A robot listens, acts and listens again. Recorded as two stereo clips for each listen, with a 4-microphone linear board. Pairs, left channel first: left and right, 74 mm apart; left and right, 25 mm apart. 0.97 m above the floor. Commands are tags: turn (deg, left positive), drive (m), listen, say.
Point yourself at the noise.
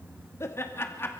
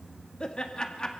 <turn deg="30"/>
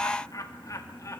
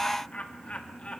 <turn deg="45"/>
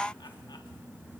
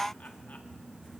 <listen/>
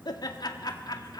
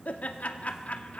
<turn deg="120"/>
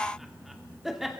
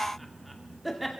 <say>Facing the laughter, 2 to 4 m away.</say>